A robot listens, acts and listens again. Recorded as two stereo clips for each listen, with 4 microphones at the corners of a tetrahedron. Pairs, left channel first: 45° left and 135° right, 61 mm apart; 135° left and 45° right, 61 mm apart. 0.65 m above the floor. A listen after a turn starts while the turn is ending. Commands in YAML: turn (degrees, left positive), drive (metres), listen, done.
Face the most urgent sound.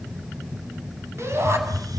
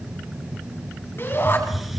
turn: -175
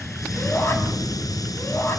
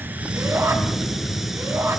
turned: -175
done: "Found it: a shout, straight ahead, over 4 m away."